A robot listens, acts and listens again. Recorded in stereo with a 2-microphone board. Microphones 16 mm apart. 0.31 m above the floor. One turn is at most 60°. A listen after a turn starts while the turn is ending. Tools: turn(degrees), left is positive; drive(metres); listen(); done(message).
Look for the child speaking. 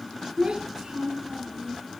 turn(degrees=-60)
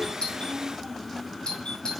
turn(degrees=-10)
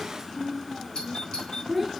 done("Facing the child speaking.")